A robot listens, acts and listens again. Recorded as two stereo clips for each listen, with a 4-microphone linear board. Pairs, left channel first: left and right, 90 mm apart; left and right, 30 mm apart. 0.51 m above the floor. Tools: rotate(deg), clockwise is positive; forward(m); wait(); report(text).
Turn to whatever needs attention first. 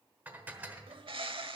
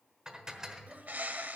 wait()
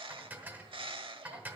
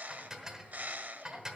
wait()
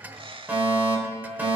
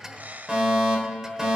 rotate(20)
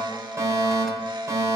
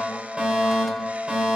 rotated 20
rotate(140)
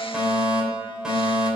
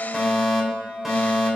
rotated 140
rotate(10)
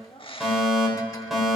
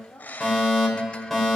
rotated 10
report("Facing the fire alarm, 2 to 4 m away.")